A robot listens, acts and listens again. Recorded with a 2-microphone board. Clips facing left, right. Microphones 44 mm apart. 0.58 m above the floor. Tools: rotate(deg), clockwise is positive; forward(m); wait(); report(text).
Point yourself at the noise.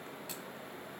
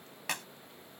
rotate(90)
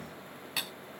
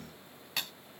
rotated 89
report("Found it: a clap, straight ahead.")